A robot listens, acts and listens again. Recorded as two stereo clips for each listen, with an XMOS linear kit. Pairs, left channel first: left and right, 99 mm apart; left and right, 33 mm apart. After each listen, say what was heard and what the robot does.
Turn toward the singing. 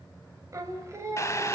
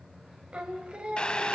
The singing: about 30° right or 150° right. Turn 30° right.
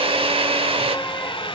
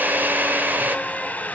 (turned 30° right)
Keep listening.
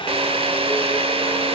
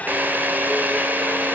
Keep listening.
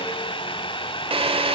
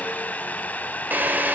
I heard singing, but can't make it out now. It was about straight ahead or 120° right.